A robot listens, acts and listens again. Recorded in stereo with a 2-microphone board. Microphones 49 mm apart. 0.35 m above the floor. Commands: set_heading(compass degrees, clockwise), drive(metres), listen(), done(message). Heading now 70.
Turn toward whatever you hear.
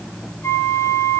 set_heading(15)
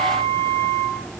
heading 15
set_heading(305)
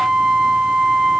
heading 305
done("Found it: a flute, straight ahead, over 4 m away.")